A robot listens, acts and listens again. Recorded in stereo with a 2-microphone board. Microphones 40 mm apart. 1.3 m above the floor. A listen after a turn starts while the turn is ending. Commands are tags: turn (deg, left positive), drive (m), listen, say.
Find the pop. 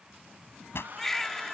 <turn deg="75"/>
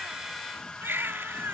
<listen/>
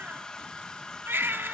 <say>I heard a pop, but can't make it out now. It was about straight ahead or 30° left.</say>